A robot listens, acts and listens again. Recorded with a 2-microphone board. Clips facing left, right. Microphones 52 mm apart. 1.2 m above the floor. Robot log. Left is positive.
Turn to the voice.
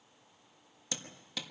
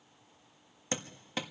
cmd idle
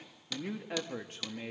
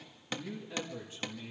note: The man speaking: about 50° left or 130° left.
cmd yaw +50
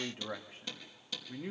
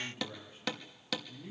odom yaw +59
note: So it is at 70° left.
cmd yaw +70
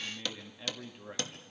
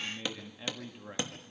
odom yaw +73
end: Facing the man speaking.